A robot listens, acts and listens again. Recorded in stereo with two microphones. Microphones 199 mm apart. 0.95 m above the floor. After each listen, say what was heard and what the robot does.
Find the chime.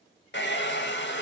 Keep listening.
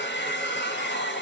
Keep listening.
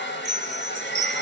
The chime: about 35° right or 145° right. Turn 35° right.
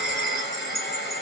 Facing the chime.